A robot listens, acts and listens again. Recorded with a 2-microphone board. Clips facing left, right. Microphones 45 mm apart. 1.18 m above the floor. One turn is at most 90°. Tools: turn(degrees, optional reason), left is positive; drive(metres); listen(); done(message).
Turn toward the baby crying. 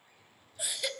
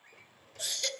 turn(degrees=30)
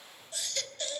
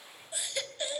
turn(degrees=-20, reason="So it is at 20° right.")
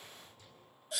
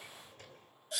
done("Found it: a baby crying, straight ahead.")